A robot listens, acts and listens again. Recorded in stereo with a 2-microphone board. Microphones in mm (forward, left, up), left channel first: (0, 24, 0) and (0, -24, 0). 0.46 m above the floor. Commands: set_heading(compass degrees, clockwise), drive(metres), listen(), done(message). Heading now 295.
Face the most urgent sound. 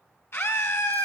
set_heading(230)
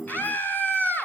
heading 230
set_heading(185)
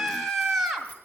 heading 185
done("Found it: a scream, straight ahead, 2 to 4 m away.")